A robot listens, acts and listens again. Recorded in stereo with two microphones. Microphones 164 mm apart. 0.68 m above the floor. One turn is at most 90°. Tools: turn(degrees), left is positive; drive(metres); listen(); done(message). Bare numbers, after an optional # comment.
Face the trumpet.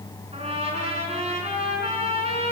# The trumpet: about 40° right or 140° right.
turn(-40)
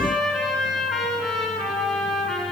done("Facing the trumpet, over 4 m away.")